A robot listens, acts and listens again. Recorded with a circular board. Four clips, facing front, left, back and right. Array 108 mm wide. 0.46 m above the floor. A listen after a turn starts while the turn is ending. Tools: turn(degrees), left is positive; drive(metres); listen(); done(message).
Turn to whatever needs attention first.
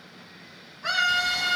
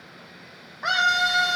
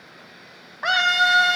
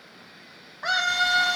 turn(degrees=175)
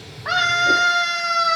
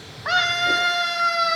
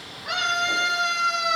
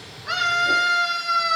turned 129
turn(degrees=45)
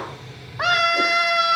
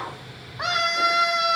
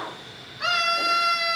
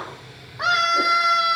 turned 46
done("Facing the scream.")